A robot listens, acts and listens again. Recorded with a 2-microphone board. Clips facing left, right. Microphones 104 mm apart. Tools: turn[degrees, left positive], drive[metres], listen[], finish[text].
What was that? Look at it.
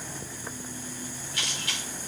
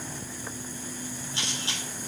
Thought: The camera shutter: about 30° right or 150° right.
Action: turn[-30]
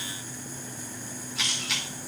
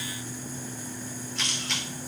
Action: finish[Found it: a camera shutter, straight ahead.]